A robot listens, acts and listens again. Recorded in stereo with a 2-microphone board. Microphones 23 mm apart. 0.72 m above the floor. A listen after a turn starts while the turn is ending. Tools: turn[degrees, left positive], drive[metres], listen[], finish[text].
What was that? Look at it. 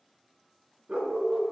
Thought: The dog barking: about 65° right or 115° right.
Action: turn[-65]
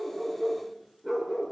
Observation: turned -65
Action: finish[Facing the dog barking.]